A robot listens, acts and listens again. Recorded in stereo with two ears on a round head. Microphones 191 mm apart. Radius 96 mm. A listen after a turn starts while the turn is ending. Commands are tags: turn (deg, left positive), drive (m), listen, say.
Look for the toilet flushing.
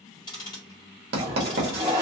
<turn deg="-15"/>
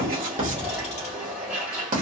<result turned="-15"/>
<say>Found it: a toilet flushing, straight ahead, 1 to 2 m away.</say>